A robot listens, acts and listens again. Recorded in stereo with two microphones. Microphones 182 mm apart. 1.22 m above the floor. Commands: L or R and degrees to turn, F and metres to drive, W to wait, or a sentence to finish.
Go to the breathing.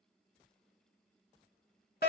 W
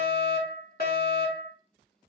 W
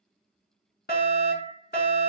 I can't make out breathing to turn to.